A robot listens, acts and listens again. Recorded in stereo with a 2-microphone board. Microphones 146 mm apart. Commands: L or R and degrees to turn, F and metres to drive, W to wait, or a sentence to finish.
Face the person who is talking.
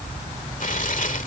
W
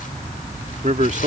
R55
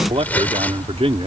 R50
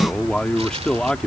Facing the man speaking.